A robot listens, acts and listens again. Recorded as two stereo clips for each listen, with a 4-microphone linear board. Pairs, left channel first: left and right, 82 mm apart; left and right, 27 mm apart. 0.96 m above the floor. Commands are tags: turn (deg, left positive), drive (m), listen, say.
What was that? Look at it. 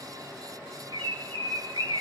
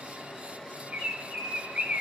<turn deg="-65"/>
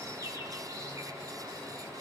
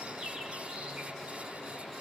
<listen/>
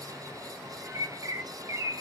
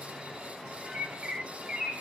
<turn deg="-45"/>
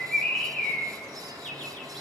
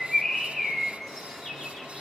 <say>Found it: a bird, straight ahead.</say>